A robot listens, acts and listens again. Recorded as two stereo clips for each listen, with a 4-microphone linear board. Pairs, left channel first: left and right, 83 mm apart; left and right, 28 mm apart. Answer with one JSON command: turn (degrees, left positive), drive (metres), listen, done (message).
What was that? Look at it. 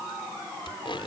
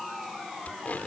{"turn": 90}
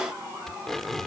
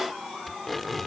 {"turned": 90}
{"done": "Facing the tape being pulled."}